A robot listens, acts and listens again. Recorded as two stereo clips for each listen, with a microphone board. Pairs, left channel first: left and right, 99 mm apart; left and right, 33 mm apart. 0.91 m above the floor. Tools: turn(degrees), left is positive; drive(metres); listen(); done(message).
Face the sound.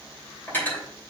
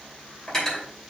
turn(degrees=20)
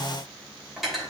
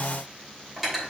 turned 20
done("Facing the cutlery clinking, 2 to 4 m away.")